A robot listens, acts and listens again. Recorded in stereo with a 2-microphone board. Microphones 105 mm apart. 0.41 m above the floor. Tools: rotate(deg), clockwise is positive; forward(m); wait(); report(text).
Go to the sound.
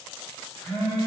rotate(-20)
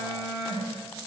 rotate(-140)
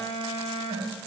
forward(1.0)
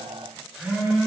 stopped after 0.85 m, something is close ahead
report("I am next to the phone buzzing.")